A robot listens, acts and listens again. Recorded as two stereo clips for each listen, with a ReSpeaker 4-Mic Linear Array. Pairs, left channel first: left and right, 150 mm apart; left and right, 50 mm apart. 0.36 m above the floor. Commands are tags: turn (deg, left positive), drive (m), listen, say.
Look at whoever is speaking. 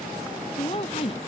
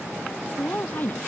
<turn deg="40"/>
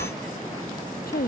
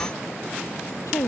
<turn deg="100"/>
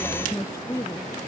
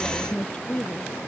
<turn deg="20"/>
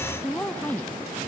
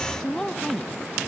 <turn deg="10"/>
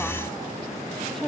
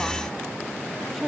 <say>Found it: a woman speaking, straight ahead.</say>